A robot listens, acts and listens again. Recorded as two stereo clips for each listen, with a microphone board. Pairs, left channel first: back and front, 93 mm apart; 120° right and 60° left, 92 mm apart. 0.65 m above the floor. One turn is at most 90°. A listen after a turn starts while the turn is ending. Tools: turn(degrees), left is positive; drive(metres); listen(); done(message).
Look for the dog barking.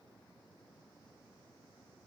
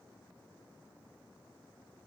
listen()
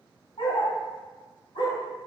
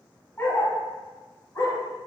turn(degrees=-90)
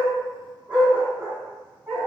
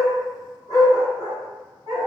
turn(degrees=-70)
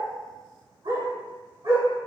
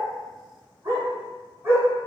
done("Found it: a dog barking, straight ahead.")